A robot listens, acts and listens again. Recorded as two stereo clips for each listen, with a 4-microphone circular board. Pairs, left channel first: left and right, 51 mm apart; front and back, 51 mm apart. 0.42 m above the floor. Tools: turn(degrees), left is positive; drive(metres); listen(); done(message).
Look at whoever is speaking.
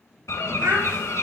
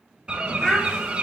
turn(degrees=-80)
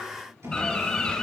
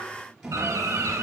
listen()
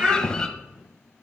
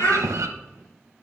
turn(degrees=-25)
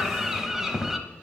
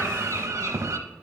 listen()
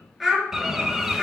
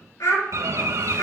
done("Facing the child speaking, 2 to 4 m away.")